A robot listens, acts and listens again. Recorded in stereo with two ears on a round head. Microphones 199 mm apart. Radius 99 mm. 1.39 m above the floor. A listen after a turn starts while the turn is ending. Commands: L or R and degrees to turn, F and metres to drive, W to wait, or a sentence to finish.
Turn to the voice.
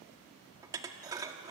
W
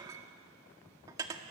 W
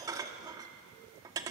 I can't make out anyone speaking to turn to.